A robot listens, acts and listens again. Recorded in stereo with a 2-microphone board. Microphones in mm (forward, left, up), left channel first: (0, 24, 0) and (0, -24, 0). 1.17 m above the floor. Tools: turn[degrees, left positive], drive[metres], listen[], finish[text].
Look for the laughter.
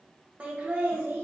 Thought: The laughter: about 45° right or 135° right.
Action: turn[-45]
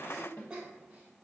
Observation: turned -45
Thought: So it is at 20° right.
Action: turn[-20]
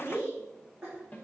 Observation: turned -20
Thought: The laughter is now 15° right.
Action: turn[-15]
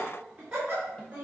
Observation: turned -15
Thought: The laughter is now 15° right.
Action: turn[-15]
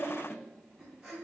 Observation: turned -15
Action: finish[Found it: laughter, straight ahead, 2 to 4 m away.]